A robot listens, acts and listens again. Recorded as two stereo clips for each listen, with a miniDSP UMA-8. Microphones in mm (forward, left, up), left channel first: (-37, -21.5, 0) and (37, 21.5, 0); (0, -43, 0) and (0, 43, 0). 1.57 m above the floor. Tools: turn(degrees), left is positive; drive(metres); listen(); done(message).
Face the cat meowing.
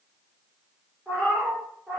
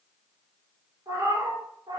turn(degrees=105)
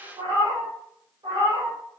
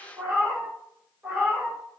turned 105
done("Facing the cat meowing, over 4 m away.")